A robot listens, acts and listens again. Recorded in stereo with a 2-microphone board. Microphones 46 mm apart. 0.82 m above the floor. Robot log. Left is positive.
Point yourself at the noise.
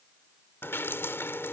note: The dripping: about 55° left or 125° left.
cmd yaw +55
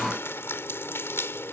note: So it is at 65° left.
cmd yaw +65
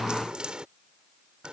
note: The dripping is now 20° right.
cmd yaw -20
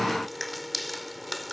end: Facing the dripping.